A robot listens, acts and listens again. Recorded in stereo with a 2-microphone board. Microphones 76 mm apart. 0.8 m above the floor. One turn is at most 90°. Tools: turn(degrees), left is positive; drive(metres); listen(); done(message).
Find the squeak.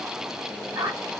turn(degrees=-65)
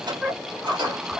done("Facing the squeak.")